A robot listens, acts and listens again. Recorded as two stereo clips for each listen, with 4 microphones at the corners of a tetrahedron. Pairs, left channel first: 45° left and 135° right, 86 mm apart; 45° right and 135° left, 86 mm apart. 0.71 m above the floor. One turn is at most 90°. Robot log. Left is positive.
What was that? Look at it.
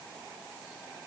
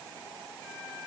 cmd idle
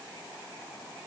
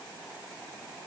cmd idle
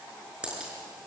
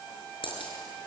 note: The dropped coin: 55° right.
cmd yaw -55
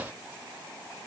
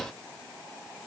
end: Facing where the dropped coin came from. I can't hear it now.